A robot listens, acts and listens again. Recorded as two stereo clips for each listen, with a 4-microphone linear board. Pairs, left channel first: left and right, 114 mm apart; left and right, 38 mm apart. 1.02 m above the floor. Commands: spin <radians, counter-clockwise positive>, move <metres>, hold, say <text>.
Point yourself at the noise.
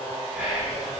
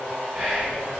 spin -0.52
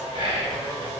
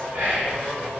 spin -2.36
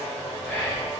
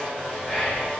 spin 0.26
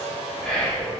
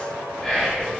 say Found it: whispering, straight ahead, 1 to 2 m away.